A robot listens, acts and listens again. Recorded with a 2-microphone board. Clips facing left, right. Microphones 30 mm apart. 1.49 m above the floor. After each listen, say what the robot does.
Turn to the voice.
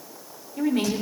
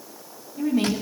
Turn 60° left.
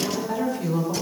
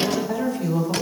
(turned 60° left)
Facing the woman speaking, over 4 m away.